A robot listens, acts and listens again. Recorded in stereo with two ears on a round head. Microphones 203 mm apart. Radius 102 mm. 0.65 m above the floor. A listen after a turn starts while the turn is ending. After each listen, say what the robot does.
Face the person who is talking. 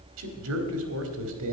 Turn 70° right.
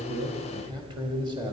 Turn 20° right.
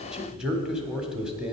Facing the man speaking, 1 to 2 m away.